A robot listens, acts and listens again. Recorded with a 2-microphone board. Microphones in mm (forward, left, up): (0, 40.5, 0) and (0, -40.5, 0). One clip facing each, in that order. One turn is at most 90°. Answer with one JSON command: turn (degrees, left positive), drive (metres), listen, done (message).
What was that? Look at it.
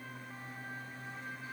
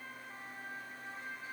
{"listen": true}
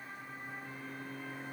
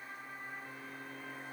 {"listen": true}
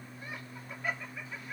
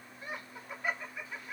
{"turn": -30}
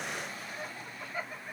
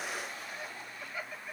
{"turn": 35}
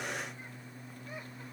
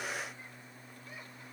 {"listen": true}
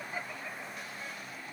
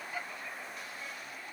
{"turn": 30}
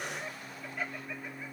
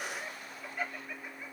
{"done": "Facing the laughter, 2 to 4 m away."}